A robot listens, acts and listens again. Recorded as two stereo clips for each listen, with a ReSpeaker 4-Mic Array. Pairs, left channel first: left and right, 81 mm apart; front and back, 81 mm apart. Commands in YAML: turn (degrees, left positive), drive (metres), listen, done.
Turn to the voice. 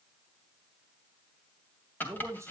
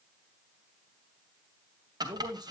turn: -145
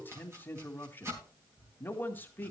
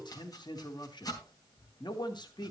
turn: 25
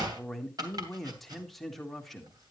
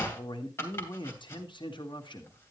done: "Facing the man speaking."